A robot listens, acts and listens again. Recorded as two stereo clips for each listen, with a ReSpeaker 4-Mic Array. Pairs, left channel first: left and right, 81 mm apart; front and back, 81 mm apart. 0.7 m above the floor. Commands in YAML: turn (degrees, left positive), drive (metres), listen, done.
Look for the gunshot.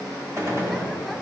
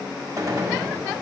turn: -140
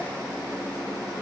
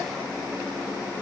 done: "Facing where the gunshot came from. I can't hear it now."